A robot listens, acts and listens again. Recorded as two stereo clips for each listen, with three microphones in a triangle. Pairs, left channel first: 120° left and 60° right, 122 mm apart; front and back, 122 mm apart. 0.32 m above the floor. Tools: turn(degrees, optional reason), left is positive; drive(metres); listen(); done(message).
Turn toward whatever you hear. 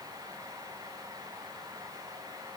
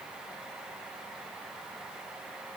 listen()
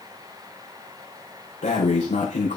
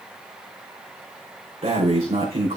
turn(degrees=140, reason="The breathing: 140° left.")
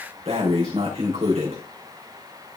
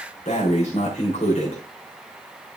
turn(degrees=-25, reason="The breathing is now 25° right.")
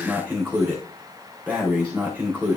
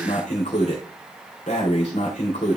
turn(degrees=15, reason="The breathing is now 15° left.")
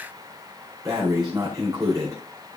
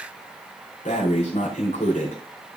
done("Facing the breathing, over 4 m away.")